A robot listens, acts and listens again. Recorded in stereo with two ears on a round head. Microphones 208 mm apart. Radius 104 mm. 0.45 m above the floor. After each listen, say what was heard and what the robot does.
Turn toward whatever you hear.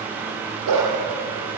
Turn 90° right.
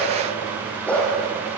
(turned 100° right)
Facing the dog barking, over 4 m away.